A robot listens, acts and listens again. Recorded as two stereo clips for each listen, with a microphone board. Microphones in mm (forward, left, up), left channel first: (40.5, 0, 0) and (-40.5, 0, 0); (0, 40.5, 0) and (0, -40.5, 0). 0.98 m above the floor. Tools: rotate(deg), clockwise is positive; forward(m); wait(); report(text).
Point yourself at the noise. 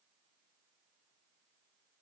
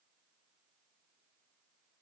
wait()
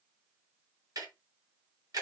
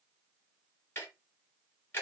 rotate(-150)
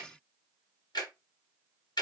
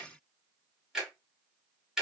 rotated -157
report("Found it: ticking, straight ahead, 1 to 2 m away.")